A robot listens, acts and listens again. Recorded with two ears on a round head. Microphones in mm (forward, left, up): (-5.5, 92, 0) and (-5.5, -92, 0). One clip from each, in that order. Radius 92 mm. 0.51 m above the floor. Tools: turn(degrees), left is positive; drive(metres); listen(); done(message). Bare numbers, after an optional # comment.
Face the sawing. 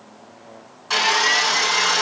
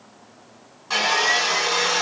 # The sawing: about 15° left or 165° left.
turn(15)
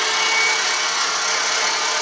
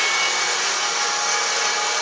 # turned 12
done("Facing the sawing, 2 to 4 m away.")